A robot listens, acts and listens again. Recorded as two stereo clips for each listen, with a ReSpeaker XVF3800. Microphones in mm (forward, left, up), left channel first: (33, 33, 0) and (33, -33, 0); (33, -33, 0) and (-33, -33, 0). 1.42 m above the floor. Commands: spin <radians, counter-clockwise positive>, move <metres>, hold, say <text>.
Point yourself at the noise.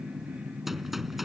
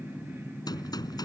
say Facing the gunshot.